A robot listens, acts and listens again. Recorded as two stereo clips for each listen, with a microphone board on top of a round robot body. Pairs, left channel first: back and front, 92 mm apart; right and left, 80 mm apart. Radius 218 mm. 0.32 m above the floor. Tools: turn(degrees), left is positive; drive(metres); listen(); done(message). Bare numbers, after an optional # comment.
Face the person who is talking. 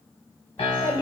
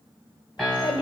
# The child speaking: 115° right.
turn(-115)
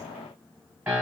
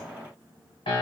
listen()
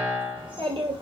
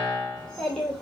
# The child speaking is now 10° right.
turn(-10)
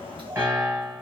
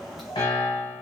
done("Facing the child speaking, 1 to 2 m away.")